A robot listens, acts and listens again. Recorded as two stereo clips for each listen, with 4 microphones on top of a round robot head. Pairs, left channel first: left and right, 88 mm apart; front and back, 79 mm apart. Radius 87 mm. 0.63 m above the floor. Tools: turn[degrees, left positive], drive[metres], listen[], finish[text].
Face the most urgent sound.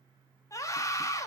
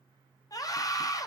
Thought: The scream: 40° left.
Action: turn[40]
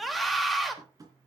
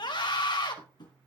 Action: finish[Facing the scream, 2 to 4 m away.]